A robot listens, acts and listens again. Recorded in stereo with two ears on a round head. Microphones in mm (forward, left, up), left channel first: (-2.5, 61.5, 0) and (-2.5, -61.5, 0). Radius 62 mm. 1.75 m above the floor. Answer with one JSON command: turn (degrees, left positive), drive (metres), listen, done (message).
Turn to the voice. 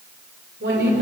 {"turn": -90}
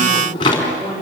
{"done": "Found it: a woman speaking, straight ahead."}